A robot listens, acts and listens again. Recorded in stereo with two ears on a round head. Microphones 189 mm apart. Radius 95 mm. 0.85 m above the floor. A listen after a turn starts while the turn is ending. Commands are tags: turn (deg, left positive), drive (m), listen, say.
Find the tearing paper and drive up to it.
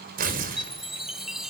<turn deg="-45"/>
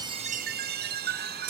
<turn deg="-90"/>
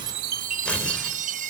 <drive m="1.0"/>
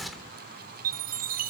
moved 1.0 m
<drive m="1.0"/>
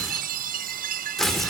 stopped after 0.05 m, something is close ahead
<say>Blocked. The tearing paper is further on, straight ahead.</say>